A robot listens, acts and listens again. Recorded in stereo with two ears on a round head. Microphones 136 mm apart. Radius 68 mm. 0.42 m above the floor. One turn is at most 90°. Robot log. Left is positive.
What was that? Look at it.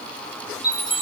cmd yaw -30
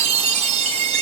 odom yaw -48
note: So it is at 130° right.
cmd yaw -90
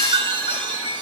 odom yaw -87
note: The chime is now 40° right.
cmd yaw -40
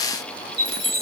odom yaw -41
end: Found it: a chime, straight ahead, 2 to 4 m away.